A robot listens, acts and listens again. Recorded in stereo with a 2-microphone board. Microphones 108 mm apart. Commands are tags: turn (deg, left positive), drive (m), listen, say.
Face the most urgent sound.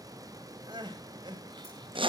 <turn deg="-45"/>
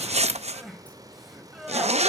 <say>Found it: crying, straight ahead.</say>